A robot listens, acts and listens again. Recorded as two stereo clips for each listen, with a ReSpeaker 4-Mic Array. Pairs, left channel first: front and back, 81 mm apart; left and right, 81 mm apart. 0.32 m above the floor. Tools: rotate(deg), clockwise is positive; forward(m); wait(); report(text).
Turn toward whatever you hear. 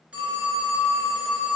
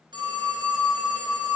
rotate(105)
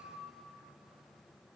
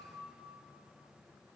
wait()
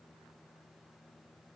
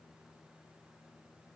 wait()
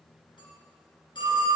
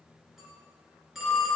report("Facing the phone ringing.")